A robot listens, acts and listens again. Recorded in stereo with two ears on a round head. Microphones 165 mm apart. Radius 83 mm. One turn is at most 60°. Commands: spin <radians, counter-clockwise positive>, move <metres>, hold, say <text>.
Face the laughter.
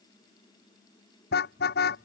hold
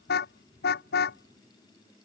hold
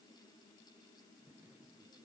say I can't make out laughter to turn to.